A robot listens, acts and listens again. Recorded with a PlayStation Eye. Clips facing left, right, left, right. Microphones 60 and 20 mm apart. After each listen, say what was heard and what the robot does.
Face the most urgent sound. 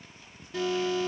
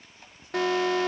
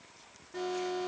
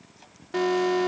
The alarm: about 65° right or 115° right. Turn 65° right.
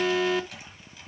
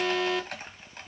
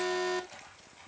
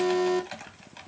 Found it: an alarm, straight ahead.